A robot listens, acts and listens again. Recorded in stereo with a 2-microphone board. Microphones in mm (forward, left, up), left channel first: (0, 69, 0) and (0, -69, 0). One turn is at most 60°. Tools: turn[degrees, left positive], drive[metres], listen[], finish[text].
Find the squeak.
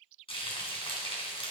Action: listen[]
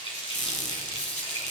Thought: The squeak: about 60° left or 120° left.
Action: turn[60]
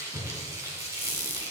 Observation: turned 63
Thought: So it is at 50° left.
Action: turn[50]
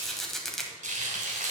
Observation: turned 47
Action: finish[Facing the squeak.]